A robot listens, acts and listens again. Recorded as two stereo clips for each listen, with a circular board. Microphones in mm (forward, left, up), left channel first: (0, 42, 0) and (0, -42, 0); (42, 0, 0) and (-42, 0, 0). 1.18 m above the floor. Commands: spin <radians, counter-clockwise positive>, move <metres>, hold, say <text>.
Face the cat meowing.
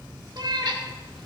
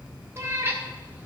spin -2.01
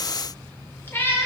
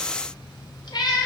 spin 0.52
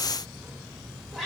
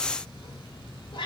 say Facing the cat meowing.